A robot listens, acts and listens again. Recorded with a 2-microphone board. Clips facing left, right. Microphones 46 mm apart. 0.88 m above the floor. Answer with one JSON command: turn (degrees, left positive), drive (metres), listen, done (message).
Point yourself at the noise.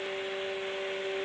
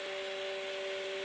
{"listen": true}
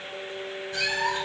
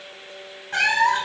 {"turn": -65}
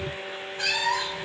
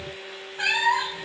{"turn": -25}
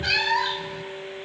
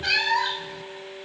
{"done": "Facing the cat meowing, under 1 m away."}